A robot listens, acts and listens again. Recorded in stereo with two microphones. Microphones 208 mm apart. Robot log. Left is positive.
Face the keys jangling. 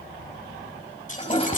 note: The keys jangling: about 40° left or 140° left.
cmd yaw +40
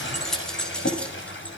end: Found it: keys jangling, straight ahead.